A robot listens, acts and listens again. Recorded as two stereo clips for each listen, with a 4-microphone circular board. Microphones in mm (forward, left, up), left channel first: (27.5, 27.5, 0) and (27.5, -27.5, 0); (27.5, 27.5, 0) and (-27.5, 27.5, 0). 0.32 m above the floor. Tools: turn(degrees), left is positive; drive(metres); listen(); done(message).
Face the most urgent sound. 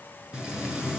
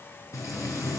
listen()
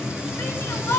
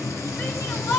turn(degrees=40)
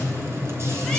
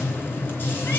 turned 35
listen()
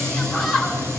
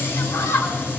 done("Facing the shout, 2 to 4 m away.")